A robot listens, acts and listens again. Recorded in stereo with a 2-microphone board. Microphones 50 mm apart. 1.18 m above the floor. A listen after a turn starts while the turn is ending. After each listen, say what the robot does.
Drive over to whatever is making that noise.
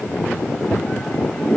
Keep listening.
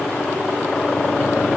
Keep listening.
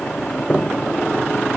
I can't make out anything to turn to.